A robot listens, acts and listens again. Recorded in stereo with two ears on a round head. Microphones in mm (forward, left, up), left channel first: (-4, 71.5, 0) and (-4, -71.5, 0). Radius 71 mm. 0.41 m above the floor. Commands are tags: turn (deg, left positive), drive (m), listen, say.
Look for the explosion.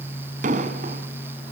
<turn deg="-50"/>
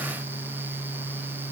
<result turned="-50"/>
<listen/>
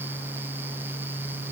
<say>I heard an explosion, but can't make it out now. It was about straight ahead or 80° right.</say>